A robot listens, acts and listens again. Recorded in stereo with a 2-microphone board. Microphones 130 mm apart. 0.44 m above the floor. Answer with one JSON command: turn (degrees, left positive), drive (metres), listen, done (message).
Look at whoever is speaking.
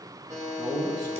{"turn": -35}
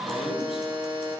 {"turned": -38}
{"listen": true}
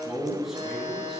{"done": "Found it: a man speaking, straight ahead."}